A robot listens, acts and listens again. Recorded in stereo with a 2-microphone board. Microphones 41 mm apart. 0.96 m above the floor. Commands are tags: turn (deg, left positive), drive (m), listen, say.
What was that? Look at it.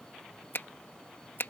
<turn deg="65"/>
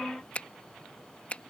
<turn deg="40"/>
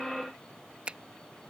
<turn deg="-30"/>
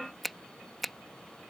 <say>Found it: a finger snap, straight ahead.</say>